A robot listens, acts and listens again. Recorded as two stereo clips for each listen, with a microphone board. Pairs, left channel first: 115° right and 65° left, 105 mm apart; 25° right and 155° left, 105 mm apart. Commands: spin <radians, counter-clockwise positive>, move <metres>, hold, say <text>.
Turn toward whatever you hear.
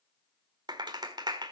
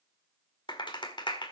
spin 0.35
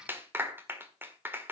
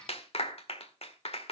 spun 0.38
say Facing the clap, 1 to 2 m away.